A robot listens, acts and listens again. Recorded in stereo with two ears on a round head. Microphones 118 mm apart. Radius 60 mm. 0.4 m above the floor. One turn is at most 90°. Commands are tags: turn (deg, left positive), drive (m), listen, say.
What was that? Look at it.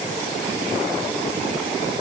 <listen/>
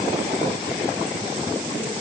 <listen/>
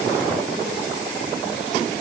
<say>I can't make out anything.</say>